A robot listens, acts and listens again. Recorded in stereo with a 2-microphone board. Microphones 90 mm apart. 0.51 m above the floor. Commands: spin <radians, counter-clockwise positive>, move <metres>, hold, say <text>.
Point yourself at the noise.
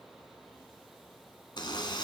spin 1.13
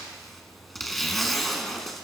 say Facing the zipper.